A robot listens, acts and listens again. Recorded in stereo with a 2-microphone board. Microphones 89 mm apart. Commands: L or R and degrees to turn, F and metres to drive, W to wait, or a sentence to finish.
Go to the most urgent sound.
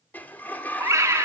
R35
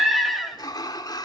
F1.0
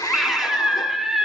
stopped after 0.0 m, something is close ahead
Something is in my way. I am facing the scream but have not reached it.